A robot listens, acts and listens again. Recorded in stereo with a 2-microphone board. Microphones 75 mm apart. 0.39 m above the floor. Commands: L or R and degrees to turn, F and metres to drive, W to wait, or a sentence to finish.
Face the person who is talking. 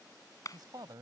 R65
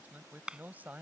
R25
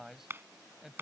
Facing the man speaking.